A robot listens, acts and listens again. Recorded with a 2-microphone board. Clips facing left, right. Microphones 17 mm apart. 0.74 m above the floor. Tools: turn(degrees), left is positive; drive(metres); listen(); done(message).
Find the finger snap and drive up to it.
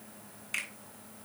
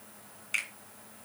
turn(degrees=-30)
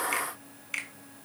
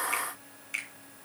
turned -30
turn(degrees=20)
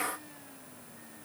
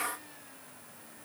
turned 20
listen()
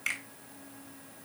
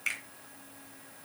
turn(degrees=10)
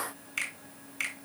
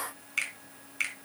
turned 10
drive(metres=1.0)
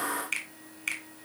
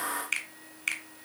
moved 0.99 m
turn(degrees=-10)
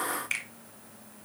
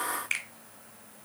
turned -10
drive(metres=1.0)
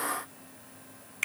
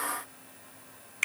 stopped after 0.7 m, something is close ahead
turn(degrees=-10)
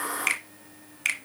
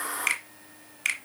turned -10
done("Arrived at the finger snap, straight ahead.")